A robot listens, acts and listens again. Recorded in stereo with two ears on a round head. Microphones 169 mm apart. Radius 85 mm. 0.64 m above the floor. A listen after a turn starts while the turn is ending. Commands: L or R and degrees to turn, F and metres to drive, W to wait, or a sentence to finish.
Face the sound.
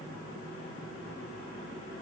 W
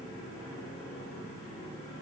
W
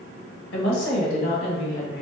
L65
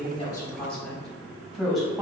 Facing the woman speaking, 2 to 4 m away.